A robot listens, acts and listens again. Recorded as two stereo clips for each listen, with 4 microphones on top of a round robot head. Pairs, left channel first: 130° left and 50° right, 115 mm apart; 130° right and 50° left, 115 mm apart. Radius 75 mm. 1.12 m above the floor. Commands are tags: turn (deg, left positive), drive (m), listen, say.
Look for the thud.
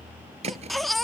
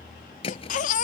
<turn deg="-85"/>
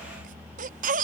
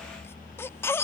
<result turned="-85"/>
<say>Facing where the thud came from. I can't hear it now.</say>